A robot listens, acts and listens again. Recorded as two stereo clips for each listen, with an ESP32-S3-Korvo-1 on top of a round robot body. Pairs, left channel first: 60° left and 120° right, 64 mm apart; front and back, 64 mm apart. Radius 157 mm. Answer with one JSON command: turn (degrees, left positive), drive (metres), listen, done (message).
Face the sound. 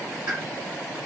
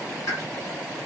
{"turn": -45}
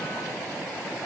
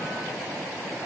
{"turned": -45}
{"done": "I heard a pop from this way, but can't make it out now."}